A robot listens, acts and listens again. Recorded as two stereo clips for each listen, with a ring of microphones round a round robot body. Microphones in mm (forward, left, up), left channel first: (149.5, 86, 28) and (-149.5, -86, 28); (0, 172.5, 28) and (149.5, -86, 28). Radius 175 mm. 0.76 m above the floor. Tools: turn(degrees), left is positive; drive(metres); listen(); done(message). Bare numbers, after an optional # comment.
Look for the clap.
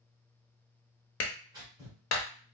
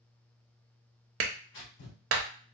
# The clap: 15° right.
turn(-15)
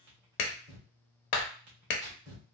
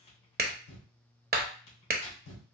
done("Facing the clap.")